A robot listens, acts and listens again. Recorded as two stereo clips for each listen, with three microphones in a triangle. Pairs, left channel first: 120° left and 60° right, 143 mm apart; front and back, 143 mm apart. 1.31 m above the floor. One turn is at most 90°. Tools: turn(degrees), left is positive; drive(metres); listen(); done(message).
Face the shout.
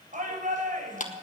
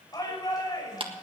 turn(degrees=-60)
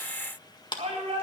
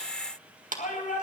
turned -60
turn(degrees=-15)
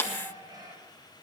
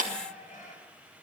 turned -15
listen()
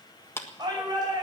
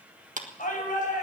done("Found it: a shout, straight ahead, over 4 m away.")